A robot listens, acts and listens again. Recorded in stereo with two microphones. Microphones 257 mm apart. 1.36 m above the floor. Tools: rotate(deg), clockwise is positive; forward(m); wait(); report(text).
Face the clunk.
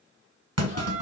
rotate(70)
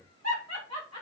wait()
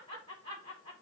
report("I heard a clunk, but can't make it out now. It was about straight ahead or 40° right.")